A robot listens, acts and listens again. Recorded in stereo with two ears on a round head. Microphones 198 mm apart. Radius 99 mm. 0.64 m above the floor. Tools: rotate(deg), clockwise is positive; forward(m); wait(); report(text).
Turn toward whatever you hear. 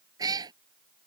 rotate(20)
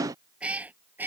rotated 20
rotate(30)
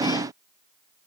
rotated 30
wait()
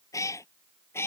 rotate(-10)
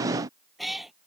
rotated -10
report("Facing the cat meowing.")